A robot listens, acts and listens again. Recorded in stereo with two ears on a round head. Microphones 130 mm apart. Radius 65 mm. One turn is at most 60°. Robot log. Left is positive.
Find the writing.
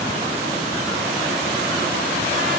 cmd idle
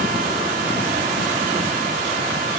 cmd idle
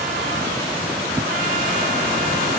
end: I can't make out writing.